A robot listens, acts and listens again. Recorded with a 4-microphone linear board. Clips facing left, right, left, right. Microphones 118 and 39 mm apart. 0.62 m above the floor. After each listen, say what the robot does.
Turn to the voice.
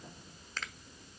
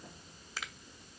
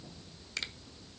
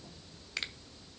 Keep listening.
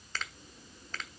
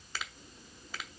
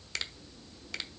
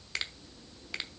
Keep listening.
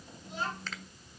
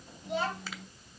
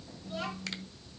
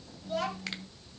Turn 65° right.
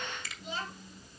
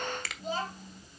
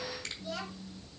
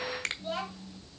Turn 45° right.
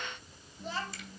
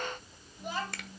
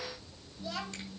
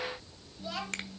Turn 15° right.
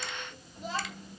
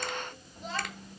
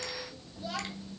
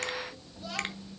Facing the child speaking.